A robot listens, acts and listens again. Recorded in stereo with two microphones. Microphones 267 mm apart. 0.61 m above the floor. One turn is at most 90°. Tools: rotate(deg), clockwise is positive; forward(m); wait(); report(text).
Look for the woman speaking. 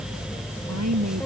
rotate(90)
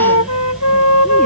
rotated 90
wait()
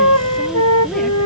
wait()
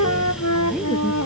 report("Facing where the woman speaking came from. I can't hear it now.")